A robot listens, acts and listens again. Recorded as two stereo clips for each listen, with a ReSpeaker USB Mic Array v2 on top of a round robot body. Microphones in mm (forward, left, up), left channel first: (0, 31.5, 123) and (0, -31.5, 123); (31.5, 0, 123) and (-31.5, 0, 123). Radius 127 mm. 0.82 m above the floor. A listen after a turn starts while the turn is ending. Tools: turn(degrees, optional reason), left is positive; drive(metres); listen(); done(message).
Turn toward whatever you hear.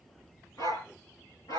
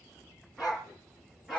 turn(degrees=90, reason="The dog barking: 90° left.")
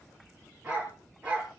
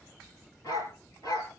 turn(degrees=-20, reason="The dog barking is now 20° right.")
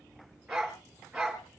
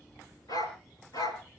turn(degrees=-10, reason="The dog barking is now 10° right.")
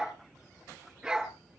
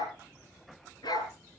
done("Found it: a dog barking, straight ahead.")